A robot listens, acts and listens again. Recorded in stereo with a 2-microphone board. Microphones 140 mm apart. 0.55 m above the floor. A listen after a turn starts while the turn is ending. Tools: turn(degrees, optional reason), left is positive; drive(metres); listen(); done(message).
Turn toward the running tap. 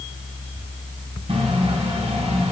turn(degrees=-45, reason="The running tap: about 45° right or 135° right.")
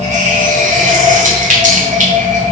turn(degrees=-90, reason="So it is at 90° right.")
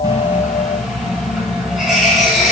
done("Found it: a running tap, straight ahead.")